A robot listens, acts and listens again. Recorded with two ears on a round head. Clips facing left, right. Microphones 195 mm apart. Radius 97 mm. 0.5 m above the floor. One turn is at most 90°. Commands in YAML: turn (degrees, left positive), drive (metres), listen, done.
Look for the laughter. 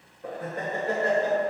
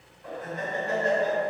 turn: 45
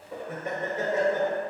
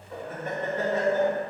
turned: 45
turn: 15
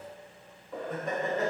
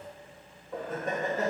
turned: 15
done: "Found it: laughter, straight ahead."